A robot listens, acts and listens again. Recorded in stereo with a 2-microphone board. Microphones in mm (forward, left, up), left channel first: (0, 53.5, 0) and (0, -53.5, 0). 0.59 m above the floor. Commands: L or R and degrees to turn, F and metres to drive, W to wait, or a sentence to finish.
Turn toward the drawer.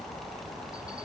W
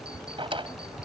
R55
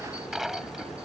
Facing the drawer.